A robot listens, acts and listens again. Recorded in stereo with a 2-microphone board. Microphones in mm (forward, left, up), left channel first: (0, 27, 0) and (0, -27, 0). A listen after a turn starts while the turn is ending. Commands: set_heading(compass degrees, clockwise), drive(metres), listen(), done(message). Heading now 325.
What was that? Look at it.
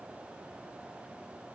listen()
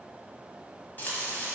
set_heading(295)
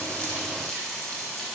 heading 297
done("Found it: frying, straight ahead.")